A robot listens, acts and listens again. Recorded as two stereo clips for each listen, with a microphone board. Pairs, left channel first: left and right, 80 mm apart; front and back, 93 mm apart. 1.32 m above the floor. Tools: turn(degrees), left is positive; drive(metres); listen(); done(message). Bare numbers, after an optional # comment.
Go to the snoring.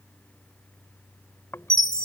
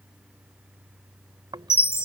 # The snoring: 145° left.
turn(145)
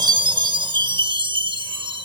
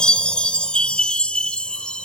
listen()
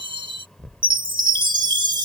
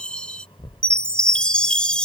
drive(1.0)
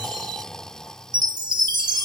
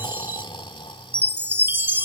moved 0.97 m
# The snoring is now 10° left.
turn(10)
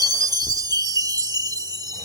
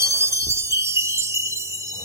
drive(1.0)
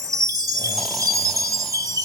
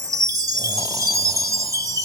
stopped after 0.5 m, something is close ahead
listen()
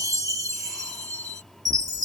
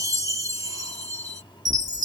done("Arrived at the snoring, straight ahead.")